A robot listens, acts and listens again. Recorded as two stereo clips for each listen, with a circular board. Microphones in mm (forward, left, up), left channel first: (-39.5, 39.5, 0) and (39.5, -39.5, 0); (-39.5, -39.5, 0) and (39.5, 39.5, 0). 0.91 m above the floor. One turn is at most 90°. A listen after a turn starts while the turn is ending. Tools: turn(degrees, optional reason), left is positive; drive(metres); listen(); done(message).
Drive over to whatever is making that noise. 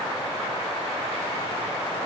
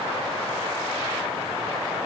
listen()
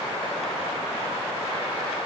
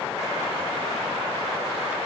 listen()
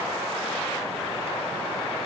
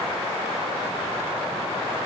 done("I can't make out anything.")